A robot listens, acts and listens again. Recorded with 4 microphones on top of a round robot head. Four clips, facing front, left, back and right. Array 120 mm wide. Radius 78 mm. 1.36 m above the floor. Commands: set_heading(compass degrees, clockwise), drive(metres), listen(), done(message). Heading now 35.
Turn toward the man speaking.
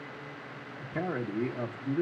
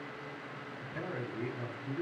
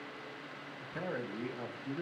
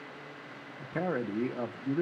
set_heading(115)
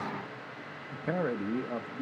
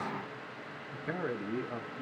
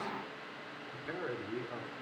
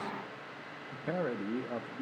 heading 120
set_heading(155)
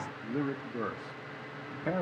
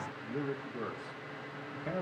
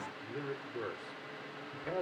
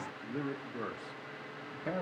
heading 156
set_heading(171)
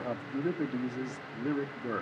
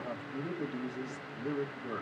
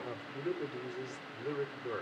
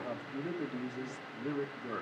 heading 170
done("Found it: a man speaking, straight ahead, 2 to 4 m away.")